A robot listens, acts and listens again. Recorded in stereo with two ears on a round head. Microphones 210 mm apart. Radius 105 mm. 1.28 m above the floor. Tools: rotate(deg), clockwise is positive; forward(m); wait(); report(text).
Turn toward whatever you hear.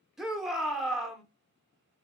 rotate(-30)
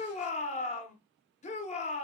rotate(-150)
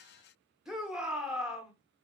report("Facing the shout.")